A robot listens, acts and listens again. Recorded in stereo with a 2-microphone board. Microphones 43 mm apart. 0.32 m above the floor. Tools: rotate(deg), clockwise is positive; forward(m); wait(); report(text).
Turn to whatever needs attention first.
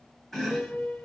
wait()
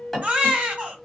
rotate(35)
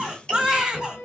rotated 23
rotate(20)
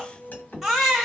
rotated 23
report("Found it: a baby crying, straight ahead.")